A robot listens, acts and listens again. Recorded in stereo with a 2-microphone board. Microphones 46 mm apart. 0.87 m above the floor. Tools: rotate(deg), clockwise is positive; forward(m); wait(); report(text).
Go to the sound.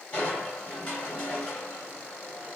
rotate(-20)
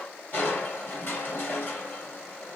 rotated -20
rotate(-135)
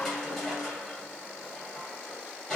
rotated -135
forward(1.0)
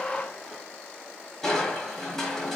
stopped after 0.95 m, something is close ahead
rotate(-15)
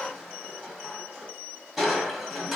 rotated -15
report("I am next to the crushing.")